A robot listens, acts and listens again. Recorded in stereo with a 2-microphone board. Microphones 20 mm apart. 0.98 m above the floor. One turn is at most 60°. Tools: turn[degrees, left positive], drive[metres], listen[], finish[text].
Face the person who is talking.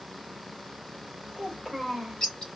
Action: turn[30]
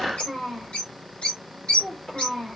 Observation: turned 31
Thought: So it is at 145° left.
Action: turn[60]
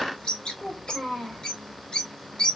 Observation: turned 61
Thought: The child speaking is now 85° left.
Action: turn[60]
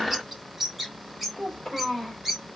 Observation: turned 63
Thought: The child speaking is now 20° left.
Action: turn[20]
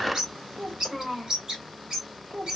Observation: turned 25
Action: finish[Found it: a child speaking, straight ahead.]